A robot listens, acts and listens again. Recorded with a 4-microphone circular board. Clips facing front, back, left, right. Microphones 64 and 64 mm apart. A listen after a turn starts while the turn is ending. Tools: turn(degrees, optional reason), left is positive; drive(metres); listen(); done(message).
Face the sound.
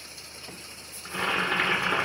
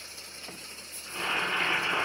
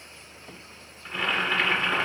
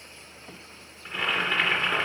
done("Found it: boiling, straight ahead.")